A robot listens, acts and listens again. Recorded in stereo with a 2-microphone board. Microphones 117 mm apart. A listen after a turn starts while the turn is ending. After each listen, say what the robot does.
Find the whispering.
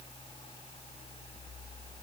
Keep listening.
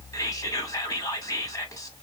Turn 30° left.
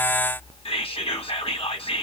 Turn 110° left.
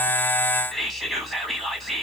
Found it: whispering, straight ahead, 1 to 2 m away.